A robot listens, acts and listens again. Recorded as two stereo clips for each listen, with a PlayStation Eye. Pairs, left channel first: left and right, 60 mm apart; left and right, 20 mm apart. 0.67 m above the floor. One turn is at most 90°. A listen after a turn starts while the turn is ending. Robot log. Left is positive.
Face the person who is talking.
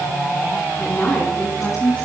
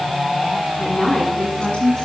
note: The woman speaking: about 20° left or 160° left.
cmd yaw +20
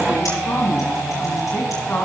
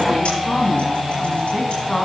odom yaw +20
note: The woman speaking: about 35° left or 145° left.
cmd yaw +35
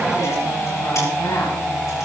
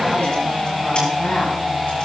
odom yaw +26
cmd idle
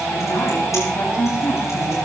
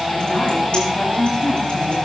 note: So it is at 125° left.
cmd yaw +90
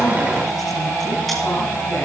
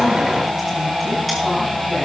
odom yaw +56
note: Nothing new. It was at 70° left.
cmd yaw +70
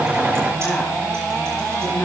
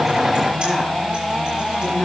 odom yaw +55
note: Nothing new. It was at 15° left.
cmd yaw +15
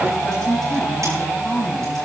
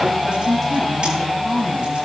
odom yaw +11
end: Found it: a woman speaking, straight ahead, over 4 m away.